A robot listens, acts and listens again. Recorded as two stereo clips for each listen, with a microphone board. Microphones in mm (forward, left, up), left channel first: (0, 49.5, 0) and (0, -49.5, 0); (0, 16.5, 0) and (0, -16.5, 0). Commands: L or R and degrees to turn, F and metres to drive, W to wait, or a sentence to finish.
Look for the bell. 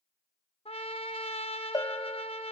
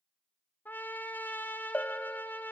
L35
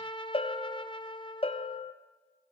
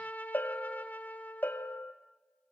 L105
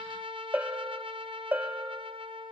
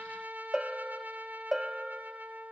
R15
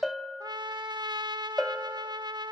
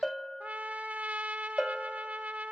Found it: a bell, straight ahead.